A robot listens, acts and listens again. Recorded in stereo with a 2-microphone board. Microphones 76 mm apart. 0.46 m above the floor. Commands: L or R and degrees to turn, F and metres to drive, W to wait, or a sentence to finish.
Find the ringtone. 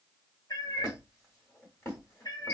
W
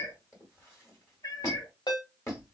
L70
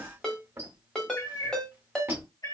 L10
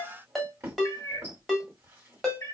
Found it: a ringtone, straight ahead, 1 to 2 m away.